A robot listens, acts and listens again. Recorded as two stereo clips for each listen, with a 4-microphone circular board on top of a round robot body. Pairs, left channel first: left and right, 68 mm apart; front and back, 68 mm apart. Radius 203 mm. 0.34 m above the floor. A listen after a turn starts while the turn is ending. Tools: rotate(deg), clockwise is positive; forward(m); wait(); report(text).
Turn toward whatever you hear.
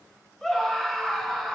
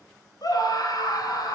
report("Facing the scream.")